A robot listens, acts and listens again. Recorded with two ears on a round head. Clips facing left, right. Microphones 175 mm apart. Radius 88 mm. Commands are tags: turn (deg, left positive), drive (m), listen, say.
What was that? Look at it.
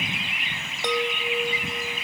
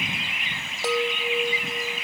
<turn deg="-30"/>
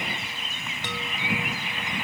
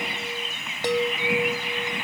<turn deg="-145"/>
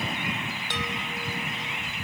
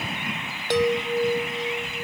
<turn deg="-35"/>
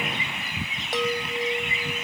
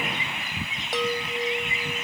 <say>Facing the chime.</say>